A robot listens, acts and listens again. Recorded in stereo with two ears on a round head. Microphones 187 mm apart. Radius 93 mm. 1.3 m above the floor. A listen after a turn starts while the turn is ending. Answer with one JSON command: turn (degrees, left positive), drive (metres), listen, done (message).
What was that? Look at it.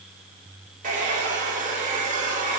{"turn": -40}
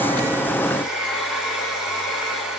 {"done": "Facing the hair dryer, 1 to 2 m away."}